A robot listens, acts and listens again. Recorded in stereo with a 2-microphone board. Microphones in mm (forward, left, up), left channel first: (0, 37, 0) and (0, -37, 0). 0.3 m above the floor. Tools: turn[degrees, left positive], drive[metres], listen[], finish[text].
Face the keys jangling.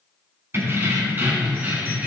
Thought: The keys jangling: about 25° right or 155° right.
Action: turn[-25]
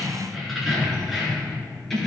Action: finish[Facing the keys jangling.]